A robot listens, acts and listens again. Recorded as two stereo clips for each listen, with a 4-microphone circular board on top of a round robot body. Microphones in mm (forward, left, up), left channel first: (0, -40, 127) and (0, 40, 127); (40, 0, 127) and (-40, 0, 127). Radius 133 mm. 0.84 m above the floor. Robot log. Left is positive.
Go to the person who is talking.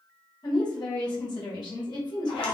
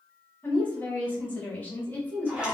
note: The woman speaking: 65° right.
cmd yaw -65
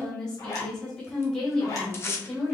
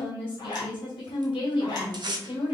note: The woman speaking is now 10° right.
cmd yaw -10
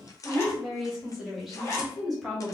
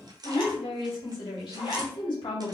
cmd fwd 1.0
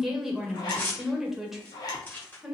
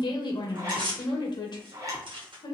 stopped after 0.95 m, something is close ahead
end: Arrived at the woman speaking, straight ahead.